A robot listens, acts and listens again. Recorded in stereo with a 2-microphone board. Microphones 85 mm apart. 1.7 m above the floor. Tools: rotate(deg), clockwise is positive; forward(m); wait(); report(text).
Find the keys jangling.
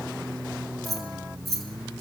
rotate(-30)
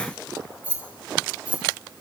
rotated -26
rotate(15)
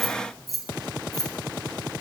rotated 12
report("Facing the keys jangling.")